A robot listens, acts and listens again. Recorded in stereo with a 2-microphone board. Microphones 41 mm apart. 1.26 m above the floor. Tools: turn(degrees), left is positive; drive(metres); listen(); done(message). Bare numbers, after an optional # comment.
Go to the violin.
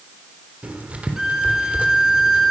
turn(-30)
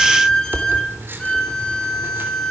# So it is at 20° left.
turn(20)
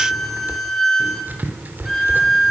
drive(1.0)
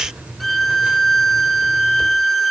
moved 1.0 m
drive(1.0)
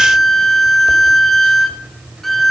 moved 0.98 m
drive(1.0)
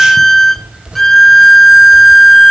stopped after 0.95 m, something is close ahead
# The violin is now 10° left.
turn(10)
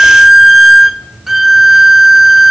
done("Arrived at the violin, straight ahead.")